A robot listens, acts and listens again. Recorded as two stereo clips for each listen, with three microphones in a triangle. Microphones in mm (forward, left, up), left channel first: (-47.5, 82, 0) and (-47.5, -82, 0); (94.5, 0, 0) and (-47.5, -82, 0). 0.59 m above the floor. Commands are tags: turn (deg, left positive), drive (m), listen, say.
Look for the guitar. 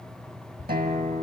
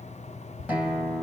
<turn deg="-70"/>
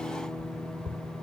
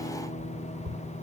<say>Facing the guitar, over 4 m away.</say>